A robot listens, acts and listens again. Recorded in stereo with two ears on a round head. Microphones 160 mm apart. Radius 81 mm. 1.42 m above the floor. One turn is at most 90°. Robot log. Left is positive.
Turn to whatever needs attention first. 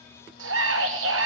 note: The scream: about 75° right or 105° right.
cmd yaw -75
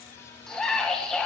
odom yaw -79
end: Facing the scream.